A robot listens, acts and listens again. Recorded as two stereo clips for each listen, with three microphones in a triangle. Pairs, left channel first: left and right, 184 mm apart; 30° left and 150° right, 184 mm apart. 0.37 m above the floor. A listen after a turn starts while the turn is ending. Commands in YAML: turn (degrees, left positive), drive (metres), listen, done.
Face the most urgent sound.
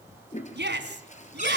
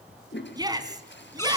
turn: -80
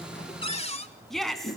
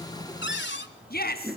done: "Found it: a shout, straight ahead."